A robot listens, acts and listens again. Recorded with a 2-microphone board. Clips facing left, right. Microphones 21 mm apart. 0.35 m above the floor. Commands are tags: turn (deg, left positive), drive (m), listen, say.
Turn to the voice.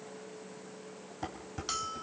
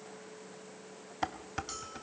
<listen/>
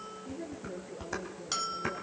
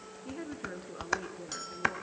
<turn deg="-75"/>
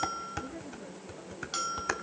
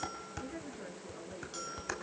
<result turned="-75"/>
<turn deg="-25"/>
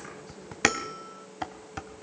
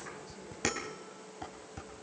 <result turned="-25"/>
<listen/>
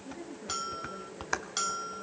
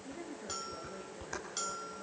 <say>Facing the woman speaking.</say>